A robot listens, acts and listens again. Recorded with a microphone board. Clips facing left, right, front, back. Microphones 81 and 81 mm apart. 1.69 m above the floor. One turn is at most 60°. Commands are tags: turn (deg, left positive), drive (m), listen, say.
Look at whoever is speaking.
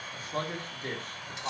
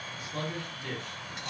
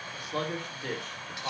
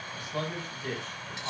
<turn deg="40"/>
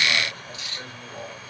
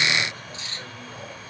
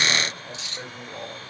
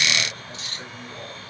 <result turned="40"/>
<turn deg="15"/>
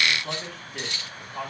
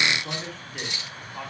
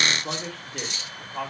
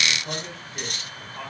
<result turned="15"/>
<say>Found it: a man speaking, straight ahead, over 4 m away.</say>